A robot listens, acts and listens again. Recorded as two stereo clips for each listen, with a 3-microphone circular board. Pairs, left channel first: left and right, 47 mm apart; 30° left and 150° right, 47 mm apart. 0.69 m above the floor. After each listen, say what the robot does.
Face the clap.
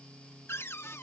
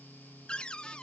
Keep listening.
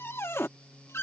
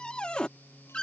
Keep listening.
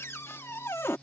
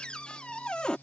I can't make out a clap to turn to.